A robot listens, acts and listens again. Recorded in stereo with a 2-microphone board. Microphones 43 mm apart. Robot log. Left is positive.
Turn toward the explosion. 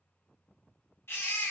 cmd idle
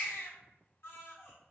cmd idle
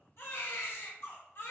end: I can't make out an explosion to turn to.